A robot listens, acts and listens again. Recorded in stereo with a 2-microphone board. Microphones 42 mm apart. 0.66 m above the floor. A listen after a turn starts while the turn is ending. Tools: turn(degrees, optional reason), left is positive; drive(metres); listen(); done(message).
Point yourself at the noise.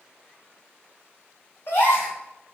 turn(degrees=60, reason="The gasp: about 60° left or 120° left.")
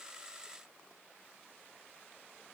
listen()
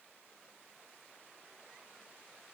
done("I heard a gasp, but can't make it out now. It was about straight ahead or 60° left.")